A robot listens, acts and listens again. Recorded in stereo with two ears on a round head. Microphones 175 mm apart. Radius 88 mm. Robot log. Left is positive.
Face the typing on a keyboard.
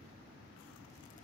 cmd idle
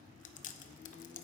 cmd idle
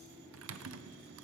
cmd yaw -90
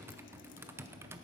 note: So it is at 15° right.
cmd yaw -15
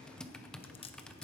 end: Facing the typing on a keyboard, under 1 m away.